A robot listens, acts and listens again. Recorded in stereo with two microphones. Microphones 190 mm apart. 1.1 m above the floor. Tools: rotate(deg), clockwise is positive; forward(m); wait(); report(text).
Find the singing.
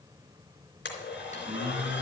rotate(30)
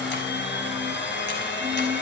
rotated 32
wait()
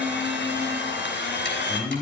rotate(10)
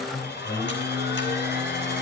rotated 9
report("Found it: singing, straight ahead, over 4 m away.")